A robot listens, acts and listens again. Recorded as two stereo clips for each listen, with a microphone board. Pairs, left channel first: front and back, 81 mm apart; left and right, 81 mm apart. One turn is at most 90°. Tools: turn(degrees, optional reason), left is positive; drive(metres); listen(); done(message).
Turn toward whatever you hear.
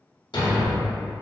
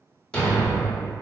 turn(degrees=10, reason="The thud: 10° left.")
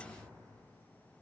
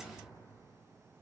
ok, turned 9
done("Facing where the thud came from. I can't hear it now.")